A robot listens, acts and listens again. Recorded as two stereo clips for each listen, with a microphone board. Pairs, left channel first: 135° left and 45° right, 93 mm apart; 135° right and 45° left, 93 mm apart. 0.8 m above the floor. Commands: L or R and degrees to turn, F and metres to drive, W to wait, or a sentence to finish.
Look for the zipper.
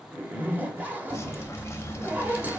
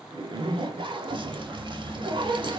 L25
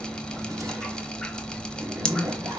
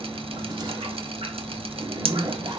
Facing the zipper.